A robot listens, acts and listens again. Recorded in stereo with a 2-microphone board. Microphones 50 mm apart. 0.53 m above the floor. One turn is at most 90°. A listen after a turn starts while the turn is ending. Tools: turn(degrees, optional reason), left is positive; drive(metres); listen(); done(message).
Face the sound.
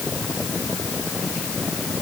listen()
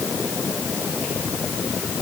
listen()
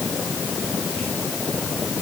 done("I can't make out anything to turn to.")